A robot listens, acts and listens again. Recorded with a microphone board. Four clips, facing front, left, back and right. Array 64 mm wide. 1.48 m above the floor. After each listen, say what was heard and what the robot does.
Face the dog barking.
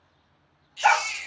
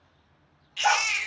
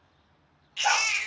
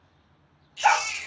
The dog barking: 25° right. Turn 25° right.
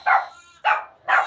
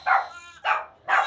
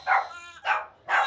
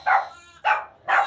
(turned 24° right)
The dog barking is now 15° right. Turn 15° right.
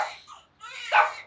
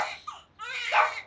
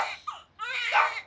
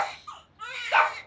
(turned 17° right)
The dog barking is now 25° right. Turn 25° right.
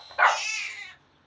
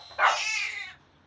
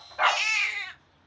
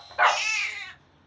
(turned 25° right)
The dog barking is now 30° right. Turn 30° right.
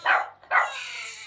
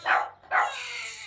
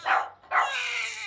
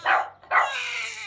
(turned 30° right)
The dog barking is now 50° right. Turn 50° right.
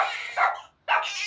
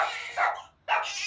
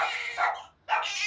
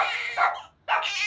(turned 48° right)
The dog barking is now 10° right. Turn 10° right.
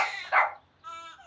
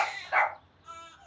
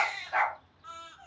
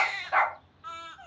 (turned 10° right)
Found it: a dog barking, straight ahead, 1 to 2 m away.